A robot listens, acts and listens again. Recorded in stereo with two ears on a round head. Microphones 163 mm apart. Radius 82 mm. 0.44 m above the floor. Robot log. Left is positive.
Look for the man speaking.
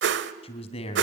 note: The man speaking: about 35° left or 145° left.
cmd yaw +35
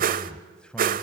end: Found it: a man speaking, straight ahead.